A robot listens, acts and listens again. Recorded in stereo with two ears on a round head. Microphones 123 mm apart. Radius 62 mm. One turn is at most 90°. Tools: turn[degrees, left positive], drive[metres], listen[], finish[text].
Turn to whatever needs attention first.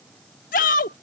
Thought: The shout: about 65° left or 115° left.
Action: turn[65]
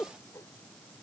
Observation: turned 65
Thought: So it is at 10° left.
Action: turn[10]
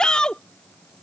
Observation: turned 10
Action: finish[Facing the shout.]